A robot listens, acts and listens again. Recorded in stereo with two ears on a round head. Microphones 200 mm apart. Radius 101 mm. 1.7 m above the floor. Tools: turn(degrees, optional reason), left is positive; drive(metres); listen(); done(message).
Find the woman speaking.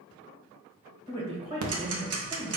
turn(degrees=-30, reason="The woman speaking: about 30° right or 150° right.")
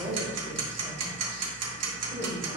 turn(degrees=-20, reason="So it is at 20° right.")
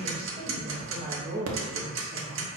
turn(degrees=-10, reason="The woman speaking is now 10° right.")
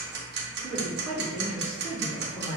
done("Found it: a woman speaking, straight ahead.")